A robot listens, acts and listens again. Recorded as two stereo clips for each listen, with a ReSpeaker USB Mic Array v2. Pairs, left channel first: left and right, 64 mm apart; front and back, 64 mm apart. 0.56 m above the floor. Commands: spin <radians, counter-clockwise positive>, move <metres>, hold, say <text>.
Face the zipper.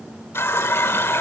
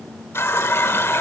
hold
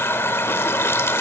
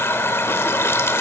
hold
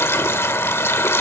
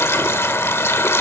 say I can't make out a zipper, only a running tap.